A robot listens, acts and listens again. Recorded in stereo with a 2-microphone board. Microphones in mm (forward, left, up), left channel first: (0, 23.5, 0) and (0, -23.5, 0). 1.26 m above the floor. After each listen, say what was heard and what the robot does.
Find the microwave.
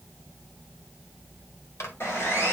Turn 90° left.
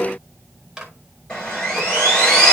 So it is at 10° right. Turn 10° right.
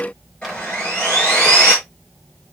Keep listening.
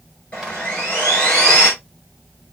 Keep listening.
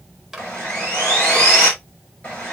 Found it: a microwave, straight ahead, 2 to 4 m away.